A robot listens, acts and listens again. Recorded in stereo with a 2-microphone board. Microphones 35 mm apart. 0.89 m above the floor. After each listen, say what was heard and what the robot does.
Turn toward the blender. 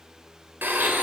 Turn 90° right.
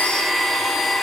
Found it: a blender, straight ahead, 2 to 4 m away.